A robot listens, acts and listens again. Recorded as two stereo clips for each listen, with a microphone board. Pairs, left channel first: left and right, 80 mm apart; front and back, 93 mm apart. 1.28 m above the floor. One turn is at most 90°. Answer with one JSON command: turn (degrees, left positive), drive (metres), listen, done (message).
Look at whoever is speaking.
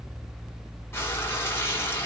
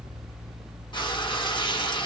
{"listen": true}
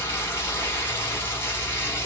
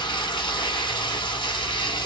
{"listen": true}
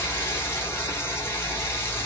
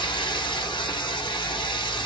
{"done": "I can't make out anyone speaking to turn to."}